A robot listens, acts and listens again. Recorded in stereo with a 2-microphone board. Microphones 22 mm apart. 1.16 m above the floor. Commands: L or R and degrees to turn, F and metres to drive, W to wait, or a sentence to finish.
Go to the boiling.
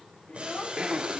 R90
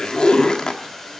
F1.0
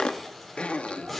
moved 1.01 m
F1.0
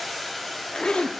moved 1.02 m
F1.0
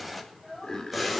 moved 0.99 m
W
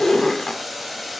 R10
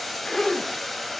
F1.0
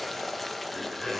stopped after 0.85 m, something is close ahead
Arrived at the boiling, straight ahead.